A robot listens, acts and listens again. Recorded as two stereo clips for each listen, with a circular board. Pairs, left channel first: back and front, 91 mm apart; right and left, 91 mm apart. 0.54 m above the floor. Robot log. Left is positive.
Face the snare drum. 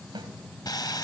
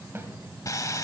note: The snare drum: 30° left.
cmd yaw +30
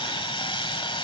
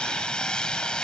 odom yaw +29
cmd idle
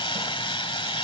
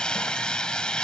cmd idle
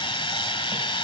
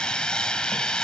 end: Facing where the snare drum came from. I can't hear it now.